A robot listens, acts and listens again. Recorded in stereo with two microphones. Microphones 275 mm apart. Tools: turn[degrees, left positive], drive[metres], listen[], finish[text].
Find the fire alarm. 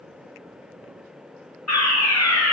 Thought: The fire alarm: about 75° left or 105° left.
Action: turn[75]
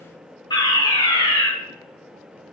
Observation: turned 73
Thought: So it is at 15° left.
Action: turn[15]
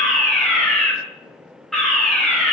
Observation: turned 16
Action: finish[Facing the fire alarm, over 4 m away.]